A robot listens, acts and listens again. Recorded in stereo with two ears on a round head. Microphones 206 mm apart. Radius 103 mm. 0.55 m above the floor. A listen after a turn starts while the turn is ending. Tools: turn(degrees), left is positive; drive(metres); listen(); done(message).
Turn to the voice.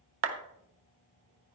listen()
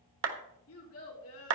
turn(degrees=65)
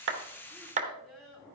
done("Facing the child speaking.")